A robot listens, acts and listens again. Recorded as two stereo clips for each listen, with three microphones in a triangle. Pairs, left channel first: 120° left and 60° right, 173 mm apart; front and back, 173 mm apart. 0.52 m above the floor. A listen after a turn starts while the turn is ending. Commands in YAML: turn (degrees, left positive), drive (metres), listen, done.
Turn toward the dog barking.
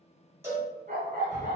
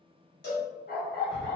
turn: -20
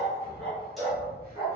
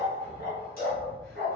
done: "Found it: a dog barking, straight ahead, 1 to 2 m away."